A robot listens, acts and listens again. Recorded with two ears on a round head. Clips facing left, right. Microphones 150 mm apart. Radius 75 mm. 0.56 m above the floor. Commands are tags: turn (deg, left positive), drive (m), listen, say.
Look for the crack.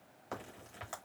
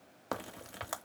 <turn deg="-70"/>
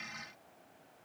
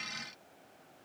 <listen/>
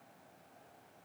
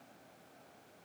<say>I heard a crack, but can't make it out now. It was about straight ahead or 40° right.</say>